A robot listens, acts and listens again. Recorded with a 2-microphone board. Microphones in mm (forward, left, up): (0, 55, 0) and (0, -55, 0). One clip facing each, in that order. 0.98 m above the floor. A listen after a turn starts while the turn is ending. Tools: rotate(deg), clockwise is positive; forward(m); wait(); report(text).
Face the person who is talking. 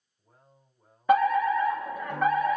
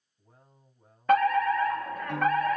rotate(20)
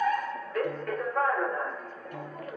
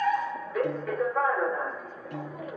wait()
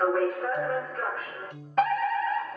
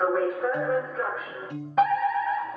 wait()
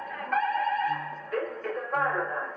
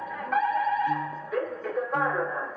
report("I heard a man speaking, but can't make it out now. It was about straight ahead or 140° right.")